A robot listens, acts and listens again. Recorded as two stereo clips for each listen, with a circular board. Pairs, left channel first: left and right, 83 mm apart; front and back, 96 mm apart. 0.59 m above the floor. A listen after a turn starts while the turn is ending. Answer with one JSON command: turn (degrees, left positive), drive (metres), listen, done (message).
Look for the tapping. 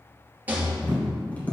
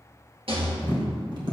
{"turn": 155}
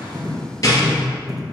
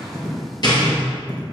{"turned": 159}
{"done": "Found it: tapping, straight ahead."}